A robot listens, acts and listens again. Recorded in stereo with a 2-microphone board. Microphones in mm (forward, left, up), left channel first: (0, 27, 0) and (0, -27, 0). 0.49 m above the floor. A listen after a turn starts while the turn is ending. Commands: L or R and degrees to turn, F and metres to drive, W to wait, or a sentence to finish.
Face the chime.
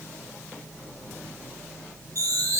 R90
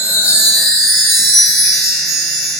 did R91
Facing the chime, 2 to 4 m away.